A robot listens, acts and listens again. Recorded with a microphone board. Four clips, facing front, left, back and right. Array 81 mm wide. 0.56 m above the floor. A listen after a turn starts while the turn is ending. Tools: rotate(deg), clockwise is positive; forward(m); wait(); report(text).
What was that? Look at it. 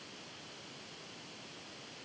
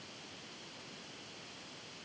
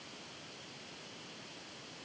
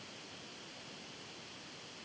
wait()
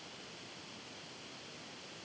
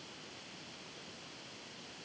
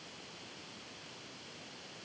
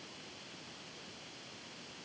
wait()
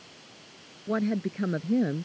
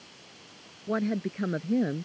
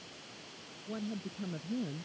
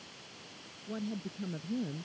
rotate(-45)
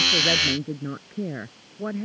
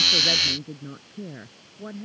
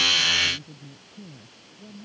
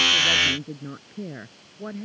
rotate(10)
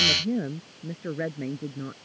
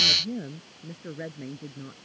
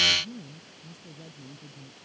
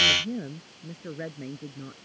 report("Facing the woman speaking.")